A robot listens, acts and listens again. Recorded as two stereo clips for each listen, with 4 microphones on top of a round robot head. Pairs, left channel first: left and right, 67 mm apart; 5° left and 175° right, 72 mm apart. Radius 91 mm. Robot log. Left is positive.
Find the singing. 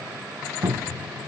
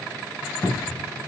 cmd idle
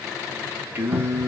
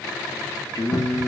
note: The singing: 45° right.
cmd yaw -45
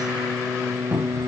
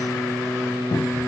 note: The singing is now 60° right.
cmd yaw -60
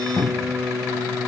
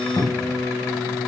note: The singing is now 25° right.
cmd yaw -25
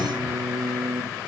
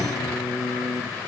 end: Facing the singing, 2 to 4 m away.